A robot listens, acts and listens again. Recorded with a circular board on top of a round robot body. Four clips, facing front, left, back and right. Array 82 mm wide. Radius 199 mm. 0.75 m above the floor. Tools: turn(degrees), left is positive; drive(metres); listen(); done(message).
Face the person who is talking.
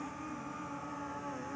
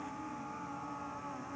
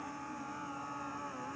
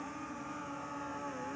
listen()
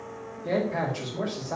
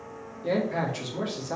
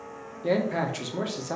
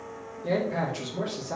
turn(degrees=175)
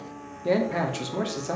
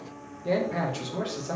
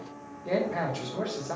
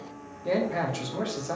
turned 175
done("Facing the man speaking.")